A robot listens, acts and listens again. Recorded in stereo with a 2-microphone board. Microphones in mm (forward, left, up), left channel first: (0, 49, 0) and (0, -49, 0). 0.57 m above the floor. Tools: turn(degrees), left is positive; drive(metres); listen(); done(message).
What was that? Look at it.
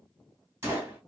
turn(degrees=-25)
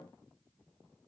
listen()
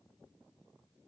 done("I heard a gunshot, but can't make it out now. It was about straight ahead or 130° right.")